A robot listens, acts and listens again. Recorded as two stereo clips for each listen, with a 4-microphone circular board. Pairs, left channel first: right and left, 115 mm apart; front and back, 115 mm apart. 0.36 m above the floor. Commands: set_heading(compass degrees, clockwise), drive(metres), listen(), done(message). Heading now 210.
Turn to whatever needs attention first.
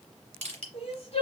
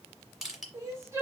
set_heading(325)
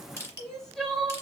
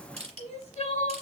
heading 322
done("Facing the crying.")